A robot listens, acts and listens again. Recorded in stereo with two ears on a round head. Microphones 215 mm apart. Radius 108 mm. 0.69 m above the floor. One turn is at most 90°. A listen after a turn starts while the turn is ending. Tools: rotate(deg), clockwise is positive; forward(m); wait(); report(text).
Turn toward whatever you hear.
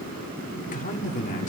rotate(-30)
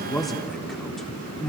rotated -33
report("Found it: a man speaking, straight ahead.")